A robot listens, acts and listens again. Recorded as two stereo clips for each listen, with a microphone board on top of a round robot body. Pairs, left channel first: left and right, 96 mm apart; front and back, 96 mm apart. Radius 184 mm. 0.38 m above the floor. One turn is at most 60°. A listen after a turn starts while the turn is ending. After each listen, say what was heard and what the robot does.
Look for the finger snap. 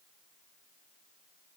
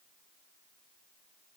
Keep listening.
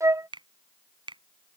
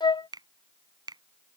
The finger snap: 130° right. Turn 60° right.
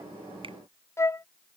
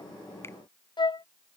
Nothing new. It was at 70° right. Turn 60° right.
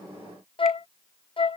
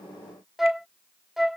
Nothing new. It was at 10° right. Turn 10° right.
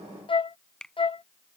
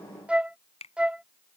Found it: a finger snap, straight ahead.